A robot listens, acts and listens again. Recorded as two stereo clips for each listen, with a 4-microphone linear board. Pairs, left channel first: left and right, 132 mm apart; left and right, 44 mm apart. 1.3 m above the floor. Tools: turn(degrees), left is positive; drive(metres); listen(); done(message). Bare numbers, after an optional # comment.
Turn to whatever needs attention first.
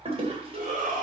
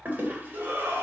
turn(-90)
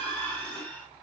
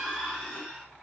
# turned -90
# So it is at 15° left.
turn(15)
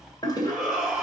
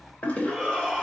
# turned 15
done("Found it: a shout, straight ahead.")